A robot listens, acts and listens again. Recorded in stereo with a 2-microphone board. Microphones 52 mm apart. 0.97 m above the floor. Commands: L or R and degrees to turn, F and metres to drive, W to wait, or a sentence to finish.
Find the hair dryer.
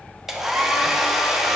R30
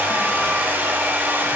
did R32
R140
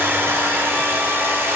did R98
R45
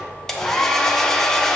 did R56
L10
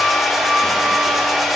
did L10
Facing the hair dryer, under 1 m away.